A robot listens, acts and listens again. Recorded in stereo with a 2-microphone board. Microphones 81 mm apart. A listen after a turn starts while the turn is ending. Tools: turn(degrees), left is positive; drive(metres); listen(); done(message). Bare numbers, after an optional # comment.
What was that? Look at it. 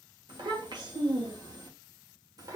# The child speaking: about 45° right or 135° right.
turn(-45)
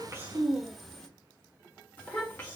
# So it is at 25° left.
turn(25)
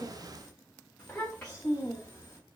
# The child speaking is now 25° left.
turn(25)
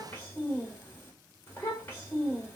# The child speaking is now 20° left.
turn(20)
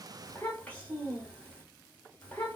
# The child speaking is now 10° left.
turn(10)
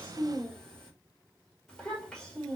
done("Facing the child speaking.")